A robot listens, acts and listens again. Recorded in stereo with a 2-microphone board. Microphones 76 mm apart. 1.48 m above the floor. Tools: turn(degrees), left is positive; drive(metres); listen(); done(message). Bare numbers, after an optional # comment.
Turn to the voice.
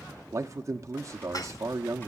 # The man speaking: about 40° right or 140° right.
turn(-40)
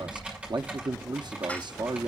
# So it is at 95° right.
turn(-95)
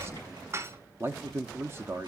# The man speaking is now 35° right.
turn(-35)
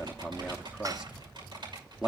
# The man speaking is now 10° right.
turn(-10)
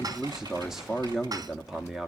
done("Facing the man speaking, under 1 m away.")